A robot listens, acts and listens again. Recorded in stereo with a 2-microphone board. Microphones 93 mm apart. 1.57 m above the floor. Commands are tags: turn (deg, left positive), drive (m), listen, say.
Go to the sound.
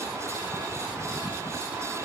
<listen/>
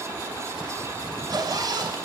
<turn deg="-50"/>
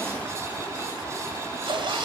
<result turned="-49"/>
<turn deg="-75"/>
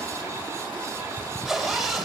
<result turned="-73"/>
<drive m="1.0"/>
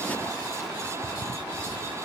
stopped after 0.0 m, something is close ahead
<listen/>
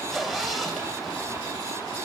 <say>Blocked. The zipper is further on, straight ahead.</say>